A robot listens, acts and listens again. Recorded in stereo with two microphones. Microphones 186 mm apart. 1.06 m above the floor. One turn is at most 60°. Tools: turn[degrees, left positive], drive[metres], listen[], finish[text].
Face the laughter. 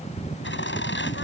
Action: turn[60]
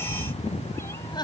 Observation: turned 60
Thought: So it is at 25° left.
Action: turn[25]
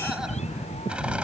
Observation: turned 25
Action: finish[Facing the laughter.]